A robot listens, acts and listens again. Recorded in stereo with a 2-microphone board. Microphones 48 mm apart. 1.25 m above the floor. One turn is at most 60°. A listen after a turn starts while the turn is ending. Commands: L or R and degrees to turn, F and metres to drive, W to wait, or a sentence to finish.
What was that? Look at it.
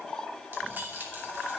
R45
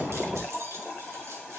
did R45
W
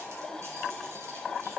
W
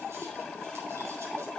I heard keys jangling, but can't make it out now. It was about straight ahead or 90° right.